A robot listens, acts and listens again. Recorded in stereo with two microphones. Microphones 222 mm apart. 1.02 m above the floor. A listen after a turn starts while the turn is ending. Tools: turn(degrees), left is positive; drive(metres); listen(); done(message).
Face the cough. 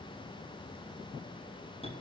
listen()
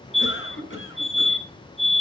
turn(degrees=60)
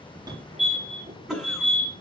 done("Found it: a cough, straight ahead.")